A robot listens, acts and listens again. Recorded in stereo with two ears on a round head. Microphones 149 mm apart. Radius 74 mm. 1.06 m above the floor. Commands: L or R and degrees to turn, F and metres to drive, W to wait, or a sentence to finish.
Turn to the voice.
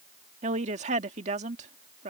R40
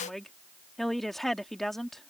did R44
Found it: a woman speaking, straight ahead.